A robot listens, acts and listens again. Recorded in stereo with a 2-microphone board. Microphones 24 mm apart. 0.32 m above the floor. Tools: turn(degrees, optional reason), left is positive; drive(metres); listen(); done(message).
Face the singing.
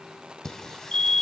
turn(degrees=25, reason="The singing: about 25° left or 155° left.")
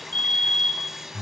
turn(degrees=-10, reason="So it is at 10° right.")
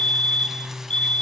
turn(degrees=-15, reason="The singing is now 15° right.")
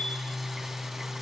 turn(degrees=-10, reason="The singing is now 10° right.")
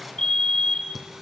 done("Facing the singing, 2 to 4 m away.")